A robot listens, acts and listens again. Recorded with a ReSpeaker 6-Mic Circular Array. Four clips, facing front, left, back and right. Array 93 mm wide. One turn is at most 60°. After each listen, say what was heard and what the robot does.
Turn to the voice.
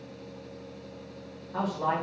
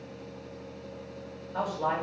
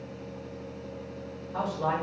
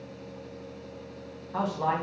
The man speaking: 75° right. Turn 60° right.
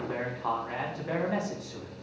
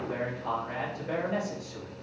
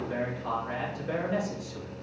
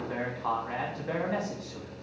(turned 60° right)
The man speaking is now 35° right. Turn 35° right.
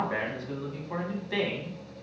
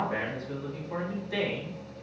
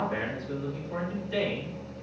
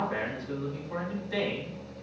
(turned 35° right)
Facing the man speaking.